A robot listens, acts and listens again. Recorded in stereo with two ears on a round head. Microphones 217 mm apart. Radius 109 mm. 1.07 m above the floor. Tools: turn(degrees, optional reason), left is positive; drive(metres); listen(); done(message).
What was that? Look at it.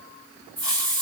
turn(degrees=-30)
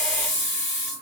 turn(degrees=15, reason="So it is at 15° left.")
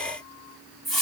done("Facing the hiss, 2 to 4 m away.")